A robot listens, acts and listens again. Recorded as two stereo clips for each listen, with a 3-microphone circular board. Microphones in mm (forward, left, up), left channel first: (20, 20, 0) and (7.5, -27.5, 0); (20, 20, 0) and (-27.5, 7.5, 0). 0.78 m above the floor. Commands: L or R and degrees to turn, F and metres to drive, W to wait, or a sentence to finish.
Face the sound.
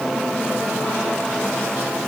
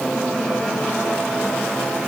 W
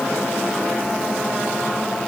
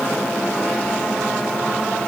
W
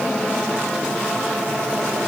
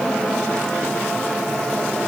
I can't make out anything.